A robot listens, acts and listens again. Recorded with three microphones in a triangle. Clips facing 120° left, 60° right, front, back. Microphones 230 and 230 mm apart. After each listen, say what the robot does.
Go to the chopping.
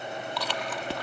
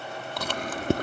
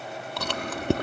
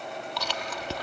Keep listening.
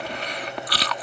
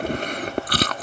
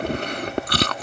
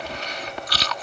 Keep listening.
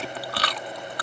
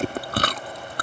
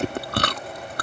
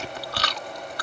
I can't make out chopping to turn to.